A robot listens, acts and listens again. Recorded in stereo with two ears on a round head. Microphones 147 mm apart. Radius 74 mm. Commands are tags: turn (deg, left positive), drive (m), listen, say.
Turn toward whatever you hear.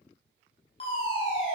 <turn deg="35"/>
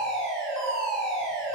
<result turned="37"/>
<say>Found it: a fire alarm, straight ahead.</say>